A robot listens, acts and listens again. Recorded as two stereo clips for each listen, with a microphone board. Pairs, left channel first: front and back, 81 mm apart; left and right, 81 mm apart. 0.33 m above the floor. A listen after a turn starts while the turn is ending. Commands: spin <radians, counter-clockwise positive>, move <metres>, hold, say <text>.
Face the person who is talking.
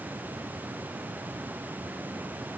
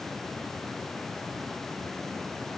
hold
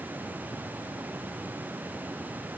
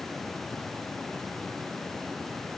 hold
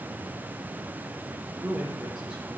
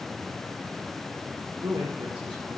spin -1.83
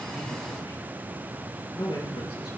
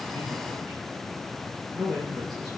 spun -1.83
say Found it: a man speaking, straight ahead.